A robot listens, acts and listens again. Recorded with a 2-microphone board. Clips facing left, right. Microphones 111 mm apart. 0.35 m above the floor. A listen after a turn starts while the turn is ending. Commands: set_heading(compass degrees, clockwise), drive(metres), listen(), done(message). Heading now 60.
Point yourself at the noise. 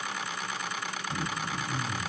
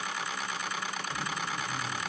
set_heading(15)
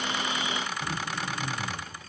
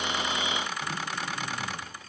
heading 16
done("Facing the throat clearing, 2 to 4 m away.")